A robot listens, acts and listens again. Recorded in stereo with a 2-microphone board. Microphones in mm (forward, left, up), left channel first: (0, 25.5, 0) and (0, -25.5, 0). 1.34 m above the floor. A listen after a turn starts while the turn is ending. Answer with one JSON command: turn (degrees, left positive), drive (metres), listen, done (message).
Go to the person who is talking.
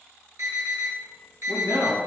{"turn": -90}
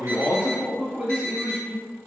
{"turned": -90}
{"turn": -10}
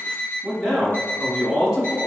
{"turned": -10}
{"drive": 1.0}
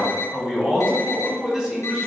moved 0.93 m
{"drive": 1.0}
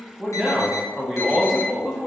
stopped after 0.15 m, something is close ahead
{"done": "Arrived at the man speaking, straight ahead."}